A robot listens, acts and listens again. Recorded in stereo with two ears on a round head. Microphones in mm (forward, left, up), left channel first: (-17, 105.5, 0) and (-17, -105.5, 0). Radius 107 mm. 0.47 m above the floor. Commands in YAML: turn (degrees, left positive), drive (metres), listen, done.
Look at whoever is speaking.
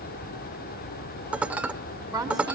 turn: -15
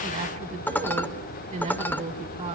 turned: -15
turn: -150
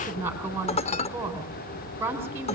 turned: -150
turn: -10
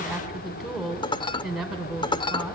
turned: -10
done: "Found it: a woman speaking, straight ahead, over 4 m away."